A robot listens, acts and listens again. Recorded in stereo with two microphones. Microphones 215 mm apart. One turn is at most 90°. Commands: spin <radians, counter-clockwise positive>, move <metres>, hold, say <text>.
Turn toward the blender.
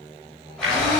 spin -1.57
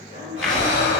say Facing the blender.